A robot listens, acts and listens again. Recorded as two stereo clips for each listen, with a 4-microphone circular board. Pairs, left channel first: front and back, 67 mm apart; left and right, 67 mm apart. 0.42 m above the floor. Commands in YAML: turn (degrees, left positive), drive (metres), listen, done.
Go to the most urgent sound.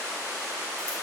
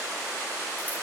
listen: true
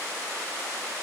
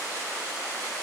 listen: true
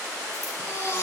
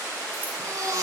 turn: -55
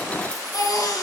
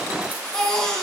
turn: 10
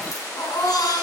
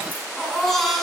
drive: 1.0
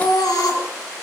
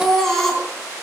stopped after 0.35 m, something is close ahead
done: "Something is in my way. I am facing the baby crying but have not reached it."